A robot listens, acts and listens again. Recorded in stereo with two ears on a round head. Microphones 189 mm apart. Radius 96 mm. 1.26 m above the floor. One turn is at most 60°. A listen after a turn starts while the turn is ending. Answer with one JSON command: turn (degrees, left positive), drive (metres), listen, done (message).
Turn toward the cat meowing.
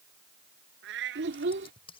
{"turn": -60}
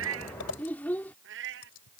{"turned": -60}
{"turn": -60}
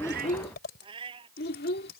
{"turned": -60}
{"turn": -25}
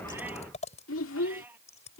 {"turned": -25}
{"turn": -10}
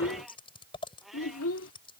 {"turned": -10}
{"done": "Facing the cat meowing."}